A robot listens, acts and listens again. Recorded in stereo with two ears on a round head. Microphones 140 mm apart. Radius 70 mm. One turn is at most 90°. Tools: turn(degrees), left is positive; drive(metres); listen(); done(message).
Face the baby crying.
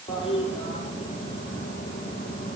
listen()
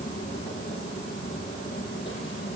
listen()
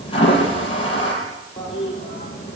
done("I can't make out a baby crying, only a toilet flushing.")